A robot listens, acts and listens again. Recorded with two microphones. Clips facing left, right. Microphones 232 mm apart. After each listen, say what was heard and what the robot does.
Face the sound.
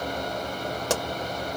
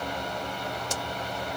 Turn 90° left.
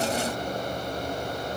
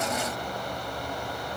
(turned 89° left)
Facing where the pop came from. I can't hear it now.